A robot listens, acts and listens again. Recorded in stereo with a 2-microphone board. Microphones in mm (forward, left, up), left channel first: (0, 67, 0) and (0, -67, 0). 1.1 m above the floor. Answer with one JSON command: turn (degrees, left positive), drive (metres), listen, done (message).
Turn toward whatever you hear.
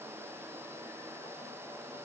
{"listen": true}
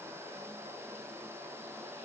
{"listen": true}
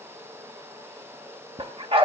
{"turn": -45}
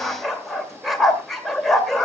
{"done": "Found it: a dog barking, straight ahead, 1 to 2 m away."}